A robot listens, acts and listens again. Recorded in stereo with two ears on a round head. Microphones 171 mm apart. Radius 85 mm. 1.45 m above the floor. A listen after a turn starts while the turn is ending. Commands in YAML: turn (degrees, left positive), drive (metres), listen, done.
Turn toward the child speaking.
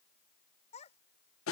turn: 35
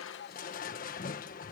listen: true
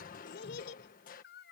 turn: 120
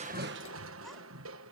listen: true
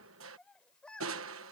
done: "Facing the child speaking."